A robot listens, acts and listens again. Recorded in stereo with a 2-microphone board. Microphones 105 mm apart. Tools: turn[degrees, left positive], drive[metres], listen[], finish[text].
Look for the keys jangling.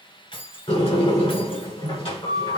Thought: The keys jangling: about 55° left or 125° left.
Action: turn[55]
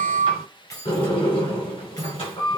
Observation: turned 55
Thought: So it is at 30° left.
Action: turn[30]
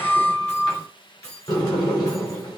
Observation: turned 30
Thought: The keys jangling is now 30° left.
Action: turn[30]
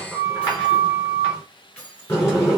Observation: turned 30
Thought: The keys jangling is now 10° left.
Action: turn[10]
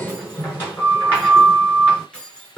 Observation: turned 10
Thought: The keys jangling is now 10° left.
Action: turn[10]
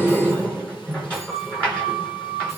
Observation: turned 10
Action: listen[]
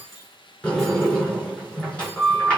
Action: finish[Facing the keys jangling.]